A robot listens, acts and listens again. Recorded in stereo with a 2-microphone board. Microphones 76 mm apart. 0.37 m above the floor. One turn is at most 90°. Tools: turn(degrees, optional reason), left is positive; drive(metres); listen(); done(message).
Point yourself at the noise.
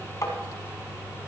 turn(degrees=45, reason="The tapping: about 45° left or 135° left.")
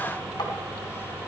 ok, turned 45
listen()
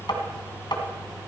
turn(degrees=90, reason="So it is at 90° left.")
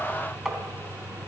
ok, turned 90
listen()
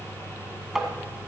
done("Facing the tapping.")